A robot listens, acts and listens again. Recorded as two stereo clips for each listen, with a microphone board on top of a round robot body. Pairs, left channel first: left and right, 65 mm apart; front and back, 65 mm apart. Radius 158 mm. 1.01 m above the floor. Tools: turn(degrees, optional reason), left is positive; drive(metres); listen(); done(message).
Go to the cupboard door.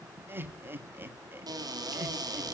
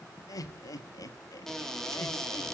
turn(degrees=-85, reason="The cupboard door: 85° right.")
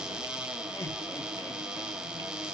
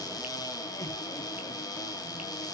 turn(degrees=-10, reason="The cupboard door is now 10° right.")
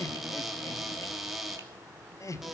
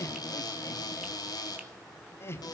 drive(metres=1.0)
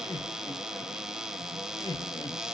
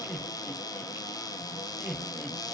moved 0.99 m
turn(degrees=-10, reason="The cupboard door is now 10° right.")
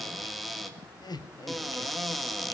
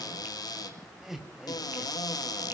drive(metres=1.0)
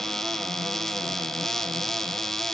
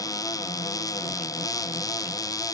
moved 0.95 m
drive(metres=1.0)
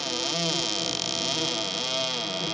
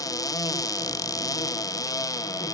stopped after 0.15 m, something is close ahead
done("Arrived at the cupboard door, straight ahead.")